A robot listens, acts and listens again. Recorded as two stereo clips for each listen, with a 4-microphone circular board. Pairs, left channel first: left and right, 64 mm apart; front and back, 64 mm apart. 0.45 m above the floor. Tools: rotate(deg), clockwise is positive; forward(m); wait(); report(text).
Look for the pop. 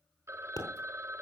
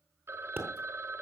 rotate(-120)
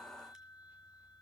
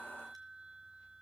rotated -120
report("Facing where the pop came from. I can't hear it now.")